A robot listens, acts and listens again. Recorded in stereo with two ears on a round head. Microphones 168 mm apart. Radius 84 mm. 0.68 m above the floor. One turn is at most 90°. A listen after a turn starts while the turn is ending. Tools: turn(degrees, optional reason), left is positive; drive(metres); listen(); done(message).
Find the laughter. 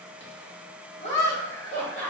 turn(degrees=65, reason="The laughter: about 65° left or 115° left.")
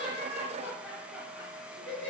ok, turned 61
turn(degrees=15, reason="So it is at 15° left.")
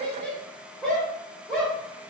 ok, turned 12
done("Found it: laughter, straight ahead, 2 to 4 m away.")